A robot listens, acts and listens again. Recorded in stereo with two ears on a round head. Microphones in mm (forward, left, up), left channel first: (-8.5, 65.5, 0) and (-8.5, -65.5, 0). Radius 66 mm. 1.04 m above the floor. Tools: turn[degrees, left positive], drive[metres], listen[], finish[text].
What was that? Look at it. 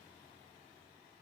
Action: listen[]
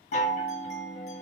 Thought: The chime: about 55° left or 125° left.
Action: turn[55]
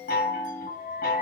Thought: So it is at 65° left.
Action: turn[65]
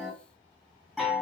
Action: finish[Found it: a chime, straight ahead.]